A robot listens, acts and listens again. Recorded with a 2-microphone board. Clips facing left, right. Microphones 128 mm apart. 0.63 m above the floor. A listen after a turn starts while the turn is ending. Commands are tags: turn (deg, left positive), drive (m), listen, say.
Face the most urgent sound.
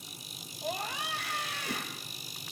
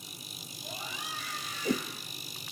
<turn deg="70"/>
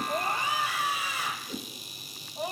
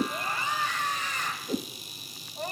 <turn deg="10"/>
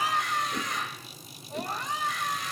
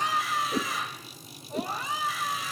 <say>Facing the scream.</say>